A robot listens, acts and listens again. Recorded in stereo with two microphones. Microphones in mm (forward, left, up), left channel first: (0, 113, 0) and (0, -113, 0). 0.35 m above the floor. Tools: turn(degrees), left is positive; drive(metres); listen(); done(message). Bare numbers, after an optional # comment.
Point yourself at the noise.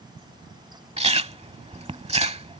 # The chewing: about 25° right or 155° right.
turn(-25)
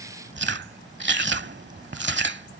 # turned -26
# So it is at 125° right.
turn(-125)
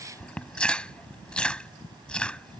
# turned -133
done("Facing the chewing.")